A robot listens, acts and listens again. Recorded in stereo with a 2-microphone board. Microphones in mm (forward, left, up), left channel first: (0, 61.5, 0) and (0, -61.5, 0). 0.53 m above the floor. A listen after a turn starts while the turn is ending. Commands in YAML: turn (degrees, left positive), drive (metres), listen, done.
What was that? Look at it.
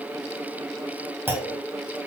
turn: -15
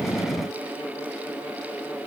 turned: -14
listen: true
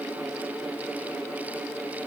done: "I heard a clunk, but can't make it out now. It was about 5° right or 150° right."